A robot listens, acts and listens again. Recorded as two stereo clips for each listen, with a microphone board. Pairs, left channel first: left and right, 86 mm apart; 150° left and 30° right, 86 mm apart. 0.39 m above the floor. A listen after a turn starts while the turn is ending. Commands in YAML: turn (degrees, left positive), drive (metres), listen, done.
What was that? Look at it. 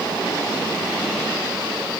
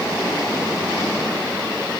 listen: true
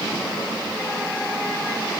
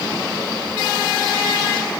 listen: true
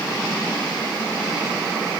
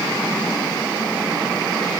done: "I can't make out anything."